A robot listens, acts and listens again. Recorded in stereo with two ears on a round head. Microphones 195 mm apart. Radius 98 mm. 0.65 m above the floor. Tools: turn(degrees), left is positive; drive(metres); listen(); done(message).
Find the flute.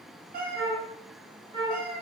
turn(degrees=-25)
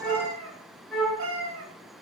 done("Found it: a flute, straight ahead, 1 to 2 m away.")